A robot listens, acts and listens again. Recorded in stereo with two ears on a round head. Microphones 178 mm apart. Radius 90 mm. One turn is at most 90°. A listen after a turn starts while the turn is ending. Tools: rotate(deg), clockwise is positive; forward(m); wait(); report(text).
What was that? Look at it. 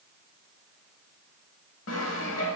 rotate(-90)
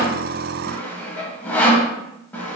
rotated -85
rotate(-10)
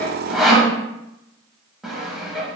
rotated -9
report("Found it: sawing, straight ahead, under 1 m away.")